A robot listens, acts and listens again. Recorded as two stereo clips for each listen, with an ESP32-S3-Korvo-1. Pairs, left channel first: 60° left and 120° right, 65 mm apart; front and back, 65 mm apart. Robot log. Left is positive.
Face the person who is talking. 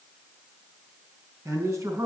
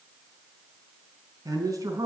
note: The man speaking: 160° right.
cmd yaw -160
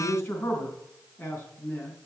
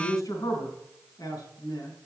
note: The man speaking is now 10° left.
cmd yaw +10
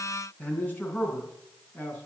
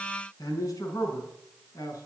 end: Found it: a man speaking, straight ahead.